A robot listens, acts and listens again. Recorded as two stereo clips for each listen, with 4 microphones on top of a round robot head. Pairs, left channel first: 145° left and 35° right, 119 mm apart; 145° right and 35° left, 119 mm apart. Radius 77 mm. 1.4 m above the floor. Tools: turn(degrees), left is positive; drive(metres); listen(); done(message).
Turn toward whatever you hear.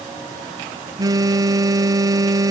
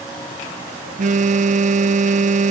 turn(degrees=25)
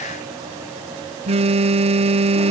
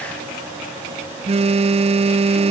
done("Found it: a phone buzzing, straight ahead.")